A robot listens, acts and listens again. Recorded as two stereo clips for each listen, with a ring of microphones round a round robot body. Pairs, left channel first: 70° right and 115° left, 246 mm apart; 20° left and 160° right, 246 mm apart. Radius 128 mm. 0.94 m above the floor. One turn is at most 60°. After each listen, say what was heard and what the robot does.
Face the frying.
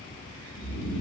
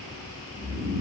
Keep listening.
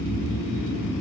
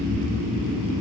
Keep listening.
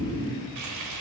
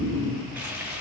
The frying: 120° left. Turn 60° left.
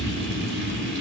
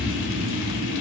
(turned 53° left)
Nothing new. It was at 65° left. Turn 60° left.
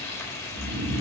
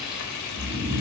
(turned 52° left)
The frying is now 10° left. Turn 10° left.
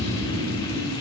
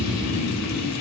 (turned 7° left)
Keep listening.
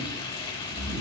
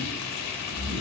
Found it: frying, straight ahead.